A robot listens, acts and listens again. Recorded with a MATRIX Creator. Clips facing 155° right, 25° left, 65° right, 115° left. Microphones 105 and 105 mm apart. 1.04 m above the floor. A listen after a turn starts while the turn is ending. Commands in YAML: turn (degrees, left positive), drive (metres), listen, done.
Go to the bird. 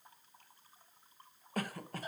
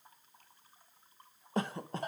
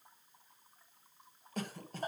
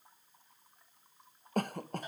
listen: true
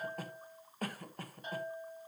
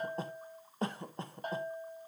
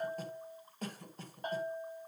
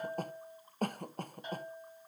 listen: true
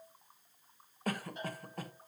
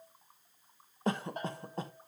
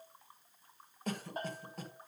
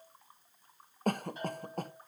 done: "I can't make out a bird, only a bell and a cough."